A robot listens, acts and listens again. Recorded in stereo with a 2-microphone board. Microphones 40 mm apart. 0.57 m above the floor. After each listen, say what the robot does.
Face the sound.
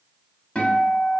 Turn 25° left.
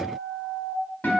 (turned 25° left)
Turn 130° left.
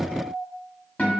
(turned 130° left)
Turn 40° left.
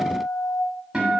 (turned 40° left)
Turn 15° right.
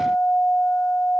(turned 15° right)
Found it: a guitar, straight ahead, under 1 m away.